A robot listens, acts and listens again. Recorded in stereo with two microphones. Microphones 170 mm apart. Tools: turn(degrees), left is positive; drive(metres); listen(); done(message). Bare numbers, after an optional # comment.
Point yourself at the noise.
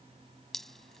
turn(30)
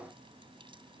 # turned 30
listen()
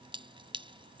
# So it is at 30° right.
turn(-30)
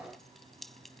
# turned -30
done("Facing the dripping.")